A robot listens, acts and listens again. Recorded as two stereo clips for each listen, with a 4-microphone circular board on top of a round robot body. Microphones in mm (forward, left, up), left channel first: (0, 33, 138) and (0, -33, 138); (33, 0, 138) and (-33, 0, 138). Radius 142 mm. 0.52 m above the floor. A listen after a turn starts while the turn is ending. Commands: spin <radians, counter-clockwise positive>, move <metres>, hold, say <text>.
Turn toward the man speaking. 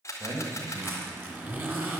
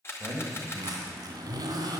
spin -2.18
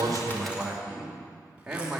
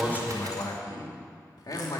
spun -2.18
spin -0.17
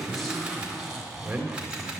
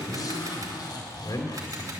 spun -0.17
spin -0.26
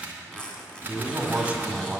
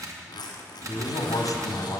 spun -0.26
spin -0.26
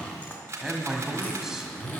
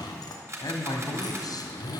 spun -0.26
say Facing the man speaking, 1 to 2 m away.